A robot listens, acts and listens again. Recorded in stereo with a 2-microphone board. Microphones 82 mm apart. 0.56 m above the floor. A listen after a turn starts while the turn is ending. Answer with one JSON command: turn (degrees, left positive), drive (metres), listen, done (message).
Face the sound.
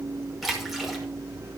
{"turn": 30}
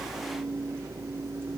{"listen": true}
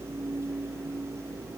{"done": "I heard a splash, but can't make it out now. It was about 30° right or 150° left."}